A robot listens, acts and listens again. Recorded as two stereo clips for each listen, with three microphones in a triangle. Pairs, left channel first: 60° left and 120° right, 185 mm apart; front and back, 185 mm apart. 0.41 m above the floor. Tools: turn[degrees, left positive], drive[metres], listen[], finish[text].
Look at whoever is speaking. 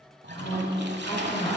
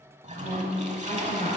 Thought: The woman speaking: 55° left.
Action: turn[55]
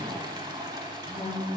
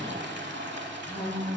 Action: finish[Facing the woman speaking, 2 to 4 m away.]